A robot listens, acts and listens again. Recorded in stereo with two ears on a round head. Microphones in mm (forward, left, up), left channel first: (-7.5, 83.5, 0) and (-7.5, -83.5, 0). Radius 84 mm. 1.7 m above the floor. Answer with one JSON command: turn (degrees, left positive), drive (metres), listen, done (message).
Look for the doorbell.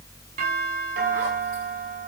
{"turn": -50}
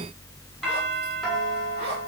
{"done": "Facing the doorbell, over 4 m away."}